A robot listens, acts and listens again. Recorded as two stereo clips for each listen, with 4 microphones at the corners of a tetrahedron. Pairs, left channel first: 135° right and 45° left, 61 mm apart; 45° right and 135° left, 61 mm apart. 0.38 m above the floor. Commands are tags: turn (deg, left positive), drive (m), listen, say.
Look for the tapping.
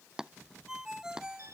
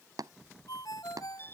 <turn deg="125"/>
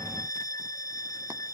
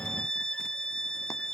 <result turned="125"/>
<listen/>
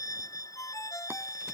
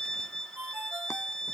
<listen/>
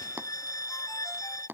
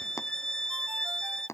<turn deg="-10"/>
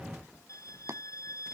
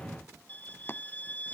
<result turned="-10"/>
<say>Found it: tapping, straight ahead.</say>